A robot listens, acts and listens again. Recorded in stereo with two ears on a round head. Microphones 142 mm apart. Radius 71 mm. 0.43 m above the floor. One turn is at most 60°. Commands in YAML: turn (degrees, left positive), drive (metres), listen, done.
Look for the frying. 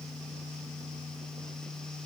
listen: true
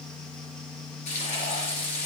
turn: 45
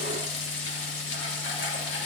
turn: 60
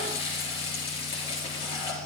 turn: 35
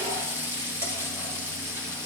turn: -15
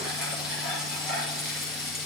done: "Found it: frying, straight ahead."